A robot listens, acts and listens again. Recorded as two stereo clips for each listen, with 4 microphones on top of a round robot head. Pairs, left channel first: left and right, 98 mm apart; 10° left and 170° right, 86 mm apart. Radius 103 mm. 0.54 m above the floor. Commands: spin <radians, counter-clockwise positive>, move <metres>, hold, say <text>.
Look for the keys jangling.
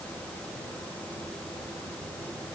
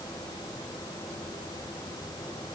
hold
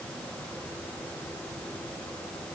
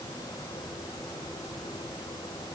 hold
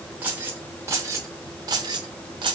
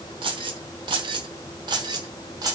spin -2.18
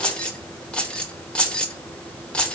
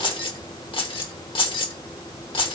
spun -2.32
spin 0.17
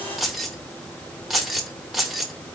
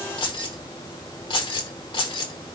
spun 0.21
say Facing the keys jangling, 1 to 2 m away.